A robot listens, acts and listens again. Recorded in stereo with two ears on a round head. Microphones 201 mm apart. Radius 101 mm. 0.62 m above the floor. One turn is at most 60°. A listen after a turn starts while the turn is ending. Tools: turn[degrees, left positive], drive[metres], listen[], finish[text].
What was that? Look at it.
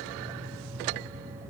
Action: listen[]
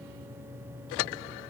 Action: listen[]
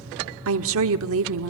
Thought: The woman speaking: about 65° right or 115° right.
Action: turn[-60]
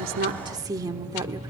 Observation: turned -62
Thought: So it is at 20° right.
Action: turn[-20]
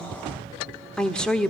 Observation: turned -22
Action: finish[Found it: a woman speaking, straight ahead.]